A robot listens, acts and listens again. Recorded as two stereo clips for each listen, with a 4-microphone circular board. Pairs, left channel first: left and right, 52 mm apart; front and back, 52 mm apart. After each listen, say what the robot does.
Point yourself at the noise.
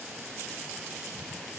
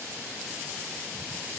Keep listening.
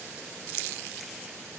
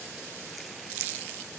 Keep listening.
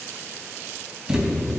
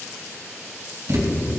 Turn 165° right.
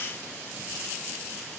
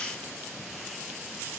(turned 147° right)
Turn 15° right.
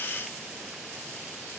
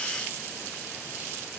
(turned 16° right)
Facing where the thud came from. I can't hear it now.